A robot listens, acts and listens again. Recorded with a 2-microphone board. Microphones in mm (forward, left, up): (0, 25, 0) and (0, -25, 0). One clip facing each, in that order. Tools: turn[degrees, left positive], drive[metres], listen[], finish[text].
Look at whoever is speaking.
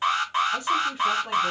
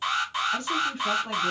Action: turn[30]
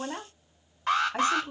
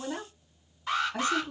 Thought: So it is at 145° left.
Action: turn[145]
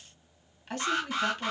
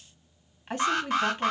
Thought: The woman speaking is now 20° right.
Action: turn[-20]
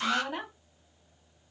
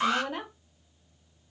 Action: finish[Facing the woman speaking.]